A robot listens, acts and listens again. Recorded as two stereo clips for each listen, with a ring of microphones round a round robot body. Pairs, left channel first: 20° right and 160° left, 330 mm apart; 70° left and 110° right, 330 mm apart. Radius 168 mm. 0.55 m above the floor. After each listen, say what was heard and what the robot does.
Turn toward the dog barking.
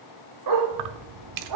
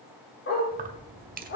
The dog barking: 125° left. Turn 125° left.
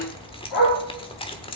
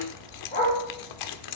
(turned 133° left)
Facing the dog barking.